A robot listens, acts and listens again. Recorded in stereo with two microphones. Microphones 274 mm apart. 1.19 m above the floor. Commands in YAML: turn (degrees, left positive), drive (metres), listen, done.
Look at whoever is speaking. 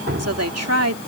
turn: -75
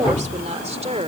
turn: -25
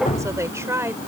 turn: -10
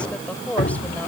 done: "Facing the woman speaking."